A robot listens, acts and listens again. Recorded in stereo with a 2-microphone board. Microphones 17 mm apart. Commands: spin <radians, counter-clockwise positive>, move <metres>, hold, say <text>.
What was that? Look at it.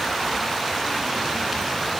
hold
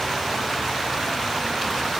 hold
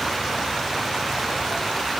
say I can't make out anything.